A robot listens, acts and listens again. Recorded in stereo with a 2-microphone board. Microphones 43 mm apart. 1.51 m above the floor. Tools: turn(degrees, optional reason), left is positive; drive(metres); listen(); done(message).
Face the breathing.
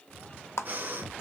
turn(degrees=-45, reason="The breathing: about 45° right or 135° right.")
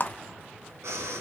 turn(degrees=-90, reason="So it is at 90° right.")
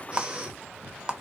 turn(degrees=-20, reason="The breathing is now 20° right.")
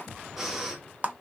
done("Found it: breathing, straight ahead, 1 to 2 m away.")